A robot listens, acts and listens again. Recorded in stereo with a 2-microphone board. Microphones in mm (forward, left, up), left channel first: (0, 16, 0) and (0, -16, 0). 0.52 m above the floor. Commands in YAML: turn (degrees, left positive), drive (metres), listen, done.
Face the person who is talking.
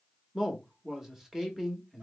turn: -30
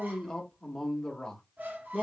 turn: 15
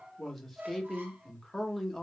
done: "Facing the man speaking, 1 to 2 m away."